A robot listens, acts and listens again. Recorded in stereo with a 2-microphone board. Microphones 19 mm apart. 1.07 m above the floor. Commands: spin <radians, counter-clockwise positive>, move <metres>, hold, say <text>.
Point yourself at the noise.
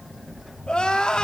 spin 0.96
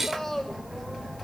hold
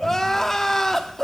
spin 0.35
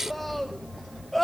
say Found it: crying, straight ahead, under 1 m away.